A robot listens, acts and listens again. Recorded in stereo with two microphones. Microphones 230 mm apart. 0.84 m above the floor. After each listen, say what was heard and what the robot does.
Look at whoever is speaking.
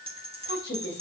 The woman speaking: about 55° left or 125° left. Turn 55° left.
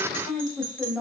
Found it: a woman speaking, straight ahead.